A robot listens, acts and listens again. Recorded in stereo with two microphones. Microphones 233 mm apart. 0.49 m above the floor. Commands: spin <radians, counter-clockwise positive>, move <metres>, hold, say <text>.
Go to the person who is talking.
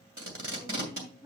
spin -0.35
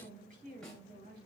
spin -2.53
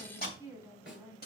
spin -0.26
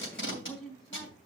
move 1.0
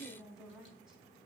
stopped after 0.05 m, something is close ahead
say Blocked. The woman speaking is further on, straight ahead.